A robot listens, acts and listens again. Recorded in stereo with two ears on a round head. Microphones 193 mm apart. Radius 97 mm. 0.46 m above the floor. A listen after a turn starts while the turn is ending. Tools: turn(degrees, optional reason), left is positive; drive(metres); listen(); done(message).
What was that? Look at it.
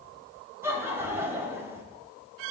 turn(degrees=-30)
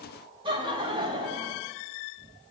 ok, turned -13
turn(degrees=-155, reason="So it is at 155° right.")
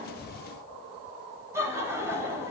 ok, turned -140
turn(degrees=-15, reason="The laughter is now 15° right.")
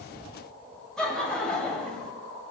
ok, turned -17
done("Facing the laughter.")